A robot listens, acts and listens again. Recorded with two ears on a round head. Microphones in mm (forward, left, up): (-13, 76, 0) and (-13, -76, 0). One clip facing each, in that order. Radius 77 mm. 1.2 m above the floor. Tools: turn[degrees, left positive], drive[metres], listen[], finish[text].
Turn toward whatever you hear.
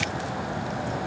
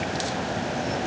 Action: listen[]
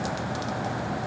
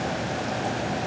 Action: listen[]
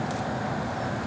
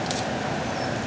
Action: finish[I can't make out anything.]